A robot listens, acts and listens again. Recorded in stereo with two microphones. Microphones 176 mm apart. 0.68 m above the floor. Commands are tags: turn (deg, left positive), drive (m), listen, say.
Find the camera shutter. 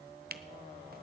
<turn deg="-60"/>
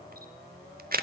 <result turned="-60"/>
<turn deg="-60"/>
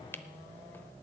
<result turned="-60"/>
<turn deg="10"/>
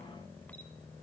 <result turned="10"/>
<listen/>
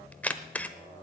<turn deg="10"/>
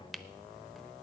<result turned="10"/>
<say>Facing the camera shutter.</say>